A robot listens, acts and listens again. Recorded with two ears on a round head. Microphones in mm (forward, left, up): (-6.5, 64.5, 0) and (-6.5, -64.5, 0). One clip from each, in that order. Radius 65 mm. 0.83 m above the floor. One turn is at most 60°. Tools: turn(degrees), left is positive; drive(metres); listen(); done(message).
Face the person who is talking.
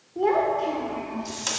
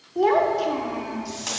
turn(degrees=-60)
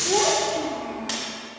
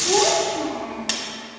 turn(degrees=-20)
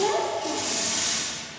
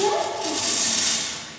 done("Found it: a child speaking, straight ahead.")